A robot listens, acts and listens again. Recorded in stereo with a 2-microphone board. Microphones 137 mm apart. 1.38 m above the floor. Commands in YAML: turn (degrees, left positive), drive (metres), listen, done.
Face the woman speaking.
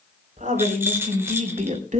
turn: -65
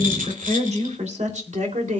turn: -65
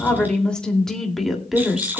done: "Facing the woman speaking."